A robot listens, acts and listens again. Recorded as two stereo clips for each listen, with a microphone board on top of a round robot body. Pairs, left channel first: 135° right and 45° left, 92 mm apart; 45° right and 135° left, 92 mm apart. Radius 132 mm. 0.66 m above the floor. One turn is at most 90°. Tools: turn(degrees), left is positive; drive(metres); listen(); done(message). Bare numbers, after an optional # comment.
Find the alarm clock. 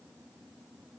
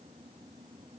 listen()
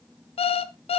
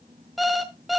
# The alarm clock: 135° right.
turn(-90)
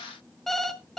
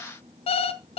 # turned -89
# The alarm clock is now 50° right.
turn(-50)
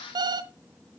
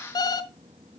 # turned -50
done("Found it: an alarm clock, straight ahead, under 1 m away.")